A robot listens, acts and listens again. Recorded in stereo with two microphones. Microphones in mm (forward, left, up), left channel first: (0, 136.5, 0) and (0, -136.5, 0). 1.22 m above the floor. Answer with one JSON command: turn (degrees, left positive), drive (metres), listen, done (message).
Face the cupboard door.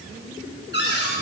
{"turn": 40}
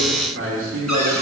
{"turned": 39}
{"listen": true}
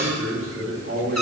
{"listen": true}
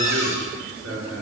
{"turn": 100}
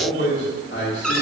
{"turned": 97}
{"done": "Found it: a cupboard door, straight ahead, 1 to 2 m away."}